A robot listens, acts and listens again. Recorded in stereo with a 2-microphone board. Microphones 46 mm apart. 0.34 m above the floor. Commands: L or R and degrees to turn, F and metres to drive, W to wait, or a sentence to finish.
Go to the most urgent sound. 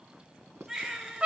R30
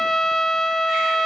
W
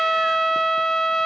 W
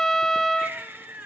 R135
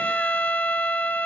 W
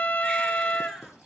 W
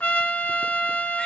I heard a baby crying from this way, but can't make it out now. I did not reach it.